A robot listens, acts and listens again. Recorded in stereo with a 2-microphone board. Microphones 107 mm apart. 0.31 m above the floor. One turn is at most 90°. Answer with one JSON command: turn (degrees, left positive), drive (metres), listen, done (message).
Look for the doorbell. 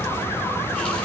{"listen": true}
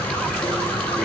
{"listen": true}
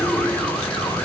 {"done": "I can't make out a doorbell, only a running tap."}